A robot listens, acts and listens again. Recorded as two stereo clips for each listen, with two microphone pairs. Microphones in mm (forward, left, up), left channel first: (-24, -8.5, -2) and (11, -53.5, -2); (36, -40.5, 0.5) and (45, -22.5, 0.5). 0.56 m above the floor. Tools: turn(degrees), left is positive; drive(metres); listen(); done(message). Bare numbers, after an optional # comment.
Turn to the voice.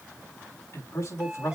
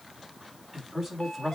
# The man speaking: 150° left.
turn(150)
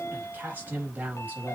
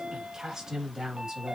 done("Found it: a man speaking, straight ahead, 2 to 4 m away.")